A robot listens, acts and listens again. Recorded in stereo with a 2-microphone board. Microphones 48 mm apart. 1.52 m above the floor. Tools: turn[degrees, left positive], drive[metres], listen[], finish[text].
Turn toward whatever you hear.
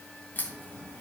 Thought: The crack: about 35° left or 145° left.
Action: turn[35]
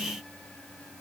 Action: listen[]
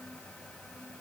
Action: finish[I heard a crack, but can't make it out now. It was about straight ahead or 110° left.]